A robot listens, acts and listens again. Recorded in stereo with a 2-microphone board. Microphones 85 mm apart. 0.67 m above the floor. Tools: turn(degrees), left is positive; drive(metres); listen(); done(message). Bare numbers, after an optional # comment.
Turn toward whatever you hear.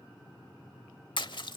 # The splash: about 65° left or 115° left.
turn(65)
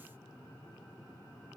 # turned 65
listen()
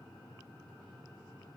done("I heard a splash, but can't make it out now. It was about straight ahead or 50° left.")